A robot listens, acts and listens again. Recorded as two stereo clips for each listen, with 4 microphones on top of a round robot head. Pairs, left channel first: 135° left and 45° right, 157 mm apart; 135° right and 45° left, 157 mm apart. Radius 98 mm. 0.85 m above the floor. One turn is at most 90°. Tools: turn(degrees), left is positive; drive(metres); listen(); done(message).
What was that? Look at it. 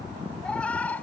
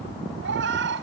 turn(degrees=50)
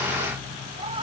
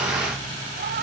turn(degrees=15)
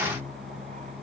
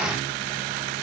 listen()
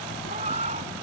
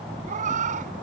done("Facing the cat meowing.")